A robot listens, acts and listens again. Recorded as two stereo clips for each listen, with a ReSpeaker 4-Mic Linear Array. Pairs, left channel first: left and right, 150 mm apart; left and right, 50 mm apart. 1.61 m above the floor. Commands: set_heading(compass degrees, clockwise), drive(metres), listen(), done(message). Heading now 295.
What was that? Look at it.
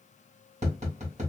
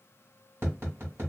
set_heading(345)
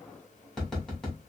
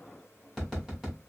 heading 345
done("Found it: tapping, straight ahead.")